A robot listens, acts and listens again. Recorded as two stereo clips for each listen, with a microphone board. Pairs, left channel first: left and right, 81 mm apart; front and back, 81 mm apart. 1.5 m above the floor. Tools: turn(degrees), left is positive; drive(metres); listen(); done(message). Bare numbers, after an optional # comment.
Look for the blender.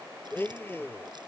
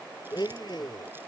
# The blender: 30° left.
turn(30)
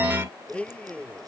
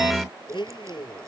# The blender is now 15° left.
turn(15)
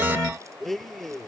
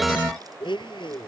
done("Facing the blender.")